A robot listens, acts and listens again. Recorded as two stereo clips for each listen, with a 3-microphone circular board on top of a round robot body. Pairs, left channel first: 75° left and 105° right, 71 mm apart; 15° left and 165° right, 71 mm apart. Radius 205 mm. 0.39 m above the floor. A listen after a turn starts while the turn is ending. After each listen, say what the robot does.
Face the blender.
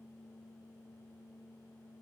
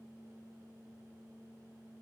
Keep listening.
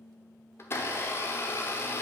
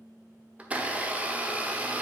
Turn 125° left.
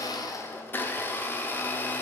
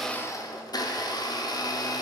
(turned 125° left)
Turn 20° left.
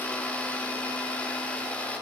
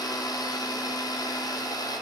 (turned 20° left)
Found it: a blender, straight ahead, 1 to 2 m away.